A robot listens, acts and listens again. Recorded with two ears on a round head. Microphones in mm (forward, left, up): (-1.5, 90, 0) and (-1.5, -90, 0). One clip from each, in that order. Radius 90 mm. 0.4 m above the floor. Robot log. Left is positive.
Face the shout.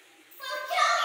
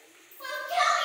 note: The shout: about 60° left or 120° left.
cmd yaw +60
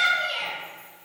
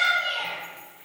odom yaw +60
note: So it is at 35° left.
cmd yaw +35
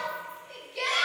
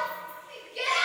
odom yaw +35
note: The shout is now 15° right.
cmd yaw -15
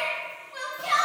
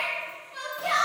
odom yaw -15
end: Facing the shout.